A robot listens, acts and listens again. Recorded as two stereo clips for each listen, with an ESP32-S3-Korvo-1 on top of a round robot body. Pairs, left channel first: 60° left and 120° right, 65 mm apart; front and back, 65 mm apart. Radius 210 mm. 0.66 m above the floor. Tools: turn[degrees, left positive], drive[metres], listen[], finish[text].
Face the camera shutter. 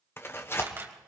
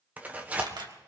Thought: The camera shutter: 175° right.
Action: turn[-175]
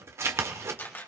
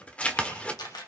Action: finish[Facing the camera shutter, 2 to 4 m away.]